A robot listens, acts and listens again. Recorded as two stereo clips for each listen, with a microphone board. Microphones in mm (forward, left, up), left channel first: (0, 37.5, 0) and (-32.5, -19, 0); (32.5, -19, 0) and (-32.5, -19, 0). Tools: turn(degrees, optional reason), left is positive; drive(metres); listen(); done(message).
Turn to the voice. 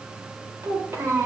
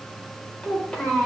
turn(degrees=-70, reason="The child speaking: 70° right.")
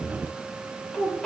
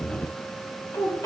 turn(degrees=-20, reason="The child speaking is now 20° right.")
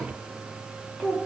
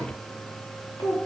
turn(degrees=-10, reason="The child speaking is now 10° right.")
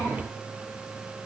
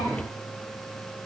listen()
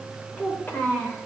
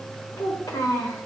done("Facing the child speaking.")